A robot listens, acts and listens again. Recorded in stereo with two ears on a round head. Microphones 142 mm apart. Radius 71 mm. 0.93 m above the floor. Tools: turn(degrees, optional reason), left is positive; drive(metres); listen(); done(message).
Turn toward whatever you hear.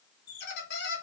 turn(degrees=75, reason="The squeak: about 75° left or 105° left.")
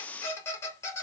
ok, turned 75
turn(degrees=15, reason="So it is at 15° left.")
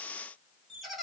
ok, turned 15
done("Facing the squeak, under 1 m away.")